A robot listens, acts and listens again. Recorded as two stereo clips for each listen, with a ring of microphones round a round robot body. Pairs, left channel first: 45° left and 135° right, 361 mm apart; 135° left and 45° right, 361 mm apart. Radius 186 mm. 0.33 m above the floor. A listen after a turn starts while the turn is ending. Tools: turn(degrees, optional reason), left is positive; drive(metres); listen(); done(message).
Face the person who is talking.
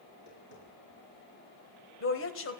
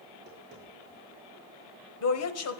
turn(degrees=95, reason="The woman speaking: 95° left.")
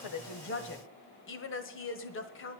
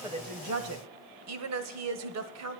done("Facing the woman speaking, 1 to 2 m away.")